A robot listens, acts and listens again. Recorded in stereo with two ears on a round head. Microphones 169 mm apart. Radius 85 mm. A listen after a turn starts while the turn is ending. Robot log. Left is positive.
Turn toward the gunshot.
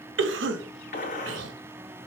note: The gunshot: about 45° left or 135° left.
cmd yaw +45
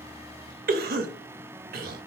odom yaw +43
cmd idle
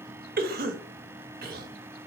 end: I heard a gunshot, but can't make it out now. It was about straight ahead or 95° left.